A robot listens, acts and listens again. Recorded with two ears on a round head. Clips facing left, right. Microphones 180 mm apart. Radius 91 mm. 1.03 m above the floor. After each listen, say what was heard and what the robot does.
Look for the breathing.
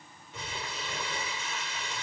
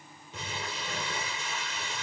Keep listening.
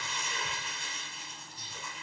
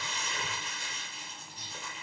Keep listening.
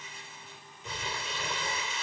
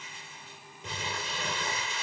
I can't make out breathing to turn to.